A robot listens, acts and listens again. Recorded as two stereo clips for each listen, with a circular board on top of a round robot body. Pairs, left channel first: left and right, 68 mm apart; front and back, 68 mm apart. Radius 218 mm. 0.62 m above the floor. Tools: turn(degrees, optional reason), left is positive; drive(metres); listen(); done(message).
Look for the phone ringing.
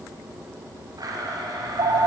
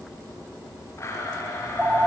turn(degrees=-110, reason="The phone ringing: 110° right.")
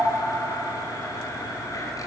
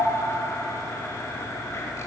turn(degrees=-10, reason="The phone ringing is now 10° right.")
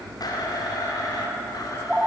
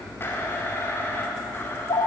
done("Facing the phone ringing.")